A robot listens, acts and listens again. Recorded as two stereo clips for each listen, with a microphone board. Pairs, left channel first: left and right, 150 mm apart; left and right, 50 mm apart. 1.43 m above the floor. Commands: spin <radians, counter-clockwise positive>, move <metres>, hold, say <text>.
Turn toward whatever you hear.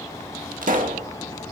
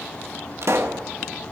spin -1.13
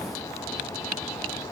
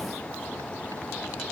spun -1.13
hold
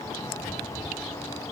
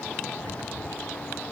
say I heard a pop, but can't make it out now. It was about straight ahead or 50° right.